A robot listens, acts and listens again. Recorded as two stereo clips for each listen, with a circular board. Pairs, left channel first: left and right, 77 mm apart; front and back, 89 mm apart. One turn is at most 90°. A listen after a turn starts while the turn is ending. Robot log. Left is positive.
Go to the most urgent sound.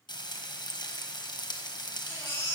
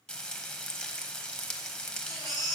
note: The baby crying: 145° left.
cmd yaw +90
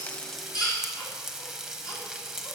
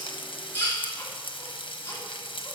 note: The baby crying is now 60° left.
cmd yaw +60
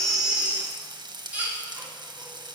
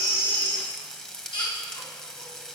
note: The baby crying is now 20° right.
cmd yaw -20
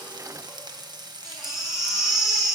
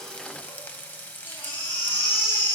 cmd fwd 1.0
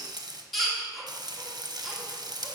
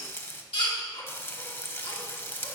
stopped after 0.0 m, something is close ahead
end: Blocked. The baby crying is further on, straight ahead.